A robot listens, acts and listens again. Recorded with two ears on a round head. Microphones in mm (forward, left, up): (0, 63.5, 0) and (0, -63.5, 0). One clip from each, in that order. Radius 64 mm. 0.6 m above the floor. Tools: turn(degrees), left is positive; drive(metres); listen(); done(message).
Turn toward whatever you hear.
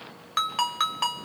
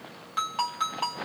turn(degrees=40)
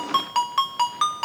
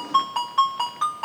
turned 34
turn(degrees=105)
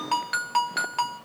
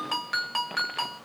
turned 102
done("Facing the ringtone.")